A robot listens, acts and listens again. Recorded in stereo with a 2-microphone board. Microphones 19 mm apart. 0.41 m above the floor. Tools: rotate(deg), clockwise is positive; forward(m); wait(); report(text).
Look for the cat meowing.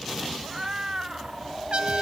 rotate(35)
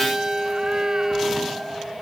rotate(105)
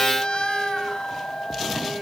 wait()
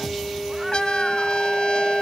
wait()
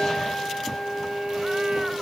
report("Facing where the cat meowing came from. I can't hear it now.")